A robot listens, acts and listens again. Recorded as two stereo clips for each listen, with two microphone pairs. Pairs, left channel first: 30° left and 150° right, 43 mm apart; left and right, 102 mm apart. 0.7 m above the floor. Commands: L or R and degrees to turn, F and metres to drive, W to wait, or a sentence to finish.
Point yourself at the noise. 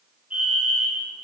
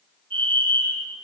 R95
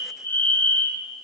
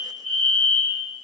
L10
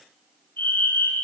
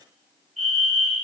Facing the fire alarm.